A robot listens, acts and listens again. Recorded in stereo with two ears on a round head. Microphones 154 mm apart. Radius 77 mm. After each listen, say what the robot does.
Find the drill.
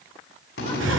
Turn 90° left.
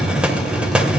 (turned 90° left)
Keep listening.
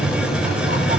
Keep listening.
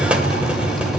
I heard a drill from this way, but can't make it out now.